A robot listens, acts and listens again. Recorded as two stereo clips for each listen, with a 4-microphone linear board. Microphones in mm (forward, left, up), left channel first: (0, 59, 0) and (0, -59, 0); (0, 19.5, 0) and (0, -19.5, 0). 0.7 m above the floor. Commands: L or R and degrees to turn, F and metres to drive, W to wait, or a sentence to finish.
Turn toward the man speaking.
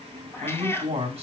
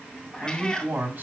R55
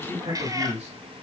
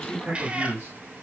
R70
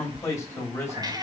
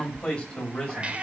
L20
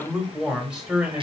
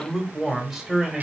R10
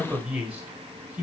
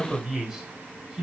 R15
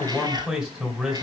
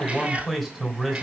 Facing the man speaking.